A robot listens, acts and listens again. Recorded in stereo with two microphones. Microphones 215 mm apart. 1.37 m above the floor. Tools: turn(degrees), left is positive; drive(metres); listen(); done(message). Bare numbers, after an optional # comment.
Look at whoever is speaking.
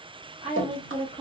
# The woman speaking: about 30° right or 150° right.
turn(-30)
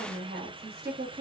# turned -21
# So it is at 130° right.
turn(-130)
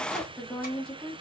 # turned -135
done("Found it: a woman speaking, straight ahead, 1 to 2 m away.")